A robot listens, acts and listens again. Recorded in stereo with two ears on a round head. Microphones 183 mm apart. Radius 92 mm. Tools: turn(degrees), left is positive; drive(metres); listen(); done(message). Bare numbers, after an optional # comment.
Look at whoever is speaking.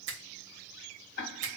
listen()
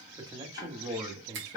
# The man speaking: about 20° right or 160° right.
turn(-20)
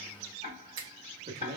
# So it is at 135° right.
turn(-135)
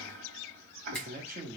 # The man speaking is now 50° right.
turn(-50)
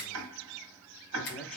done("Found it: a man speaking, straight ahead.")